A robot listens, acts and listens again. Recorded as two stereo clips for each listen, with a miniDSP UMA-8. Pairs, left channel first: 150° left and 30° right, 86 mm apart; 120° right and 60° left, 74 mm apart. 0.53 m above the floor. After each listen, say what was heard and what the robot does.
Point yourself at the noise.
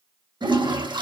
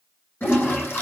The toilet flushing: 55° right. Turn 55° right.
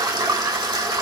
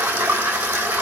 Found it: a toilet flushing, straight ahead.